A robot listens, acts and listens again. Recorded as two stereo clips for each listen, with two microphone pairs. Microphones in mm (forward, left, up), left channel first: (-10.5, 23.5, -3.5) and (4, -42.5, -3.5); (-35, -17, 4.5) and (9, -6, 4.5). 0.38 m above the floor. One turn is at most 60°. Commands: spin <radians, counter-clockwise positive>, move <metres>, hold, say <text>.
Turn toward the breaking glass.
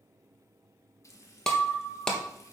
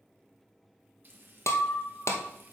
spin -1.05
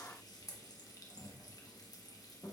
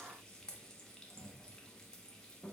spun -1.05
spin -1.05
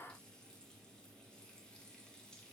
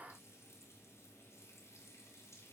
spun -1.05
spin -0.96
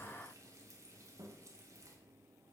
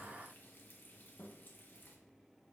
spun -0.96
say Facing where the breaking glass came from. I can't hear it now.